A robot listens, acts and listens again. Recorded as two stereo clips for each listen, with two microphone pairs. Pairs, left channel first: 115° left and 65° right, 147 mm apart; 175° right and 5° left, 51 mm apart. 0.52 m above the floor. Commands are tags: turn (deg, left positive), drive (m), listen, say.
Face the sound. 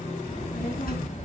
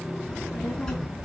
<turn deg="115"/>
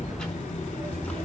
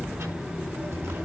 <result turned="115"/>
<turn deg="35"/>
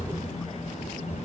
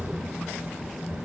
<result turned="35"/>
<turn deg="10"/>
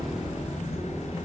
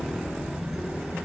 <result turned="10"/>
<say>Found it: a child speaking, straight ahead, over 4 m away.</say>